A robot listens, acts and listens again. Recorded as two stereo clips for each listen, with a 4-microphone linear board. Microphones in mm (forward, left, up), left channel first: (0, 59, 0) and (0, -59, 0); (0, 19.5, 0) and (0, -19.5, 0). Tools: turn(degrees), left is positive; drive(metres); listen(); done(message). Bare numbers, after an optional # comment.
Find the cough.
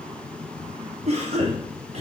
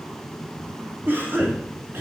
# The cough: about 65° right or 115° right.
turn(-65)
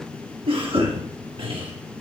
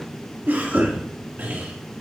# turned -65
# So it is at 50° right.
turn(-50)
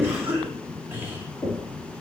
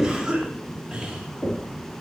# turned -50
# The cough is now 15° right.
turn(-15)
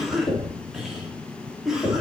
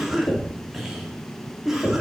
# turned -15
done("Facing the cough.")